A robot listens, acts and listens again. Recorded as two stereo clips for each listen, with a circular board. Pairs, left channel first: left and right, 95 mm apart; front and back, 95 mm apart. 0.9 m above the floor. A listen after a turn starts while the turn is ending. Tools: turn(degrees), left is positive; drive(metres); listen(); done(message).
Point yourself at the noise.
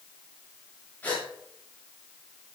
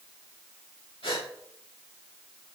turn(degrees=15)
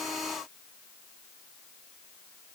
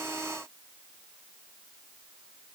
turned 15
done("Facing where the gasp came from. I can't hear it now.")